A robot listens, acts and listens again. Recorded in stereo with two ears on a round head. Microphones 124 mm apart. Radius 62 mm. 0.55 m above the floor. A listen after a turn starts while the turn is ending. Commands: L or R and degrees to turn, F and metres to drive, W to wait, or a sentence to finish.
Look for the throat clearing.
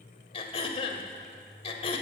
L40
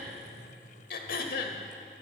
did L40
L95
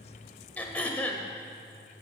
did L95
L10
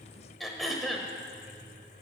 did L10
Found it: throat clearing, straight ahead.